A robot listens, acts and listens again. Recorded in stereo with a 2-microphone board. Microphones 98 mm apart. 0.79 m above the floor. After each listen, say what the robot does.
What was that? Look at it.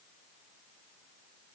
Keep listening.
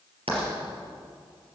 Turn 70° right.
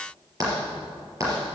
Turn 35° right.
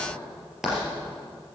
Found it: writing, straight ahead, over 4 m away.